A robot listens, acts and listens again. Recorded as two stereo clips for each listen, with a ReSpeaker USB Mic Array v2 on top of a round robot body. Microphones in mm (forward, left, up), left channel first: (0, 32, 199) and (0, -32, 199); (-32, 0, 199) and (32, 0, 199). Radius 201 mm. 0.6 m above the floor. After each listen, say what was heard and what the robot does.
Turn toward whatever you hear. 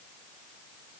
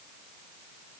Keep listening.
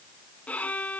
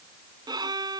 The violin: 20° left. Turn 20° left.
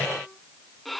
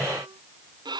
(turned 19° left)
Facing the violin.